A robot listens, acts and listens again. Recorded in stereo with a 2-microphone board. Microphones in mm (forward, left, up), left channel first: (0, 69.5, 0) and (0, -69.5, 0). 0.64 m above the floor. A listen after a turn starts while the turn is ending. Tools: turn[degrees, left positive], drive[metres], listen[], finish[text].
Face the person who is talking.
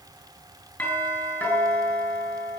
Action: listen[]
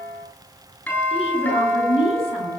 Thought: The woman speaking: about 45° left or 135° left.
Action: turn[45]
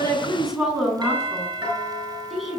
Action: finish[Found it: a woman speaking, straight ahead, over 4 m away.]